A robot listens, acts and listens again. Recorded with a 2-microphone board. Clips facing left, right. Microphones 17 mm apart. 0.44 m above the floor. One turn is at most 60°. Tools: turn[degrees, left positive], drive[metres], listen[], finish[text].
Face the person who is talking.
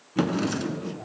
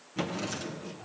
Thought: The man speaking: about 20° left or 160° left.
Action: turn[20]
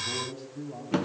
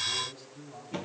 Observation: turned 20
Action: finish[Found it: a man speaking, straight ahead.]